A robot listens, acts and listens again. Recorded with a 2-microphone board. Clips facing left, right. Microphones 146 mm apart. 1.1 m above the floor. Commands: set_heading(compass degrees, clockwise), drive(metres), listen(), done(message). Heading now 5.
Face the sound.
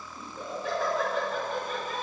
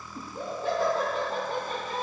set_heading(35)
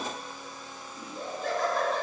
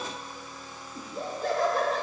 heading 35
set_heading(160)
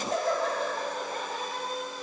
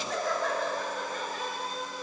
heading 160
set_heading(125)
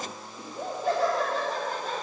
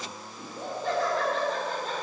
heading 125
set_heading(115)
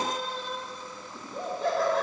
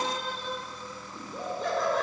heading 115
done("Facing the laughter.")